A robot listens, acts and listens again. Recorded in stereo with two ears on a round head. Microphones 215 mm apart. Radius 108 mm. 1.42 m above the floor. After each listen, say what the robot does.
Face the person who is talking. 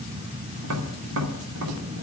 Keep listening.
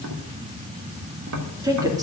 Turn 15° right.
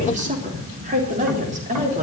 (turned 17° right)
Turn 35° right.
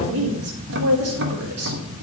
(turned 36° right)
Turn 110° right.
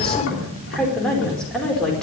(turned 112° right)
Found it: a woman speaking, straight ahead.